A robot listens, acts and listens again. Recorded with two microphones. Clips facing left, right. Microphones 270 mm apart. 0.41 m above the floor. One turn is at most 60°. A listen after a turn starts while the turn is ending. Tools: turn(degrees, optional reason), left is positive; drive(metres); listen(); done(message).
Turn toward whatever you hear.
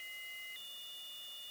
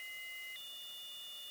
listen()
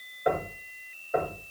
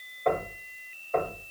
turn(degrees=30)
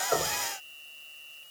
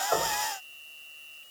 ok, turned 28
listen()
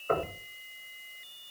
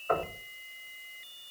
turn(degrees=60, reason="So it is at 145° left.")
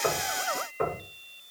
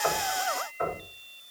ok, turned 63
turn(degrees=60, reason="The knocking is now 80° left.")
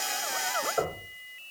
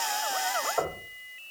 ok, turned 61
turn(degrees=20, reason="The knocking is now 20° left.")
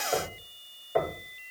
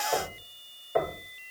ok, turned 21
done("Facing the knocking.")